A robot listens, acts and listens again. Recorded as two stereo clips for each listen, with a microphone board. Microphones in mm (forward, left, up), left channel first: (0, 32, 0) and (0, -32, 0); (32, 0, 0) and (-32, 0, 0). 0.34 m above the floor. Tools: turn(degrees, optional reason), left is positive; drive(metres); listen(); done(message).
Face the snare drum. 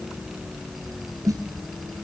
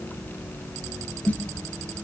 turn(degrees=-65, reason="The snare drum: 65° right.")
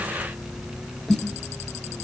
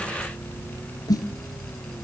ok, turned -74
done("Facing the snare drum.")